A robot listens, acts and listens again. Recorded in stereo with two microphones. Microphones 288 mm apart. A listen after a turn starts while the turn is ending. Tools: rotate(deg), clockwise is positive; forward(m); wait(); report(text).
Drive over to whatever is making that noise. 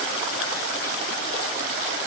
wait()
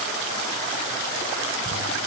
rotate(70)
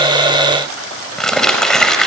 forward(1.0)
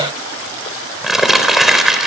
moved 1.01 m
forward(1.0)
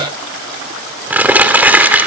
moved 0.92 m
forward(1.0)
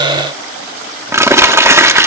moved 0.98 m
rotate(10)
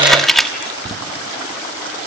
forward(1.0)
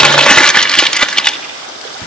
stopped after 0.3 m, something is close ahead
report("I am next to the crumpling.")